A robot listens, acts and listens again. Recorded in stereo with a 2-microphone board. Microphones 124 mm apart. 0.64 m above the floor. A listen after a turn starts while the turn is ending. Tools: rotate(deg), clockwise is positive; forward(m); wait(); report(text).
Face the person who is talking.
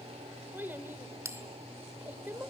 rotate(15)
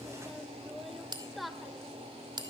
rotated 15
report("Facing the child speaking.")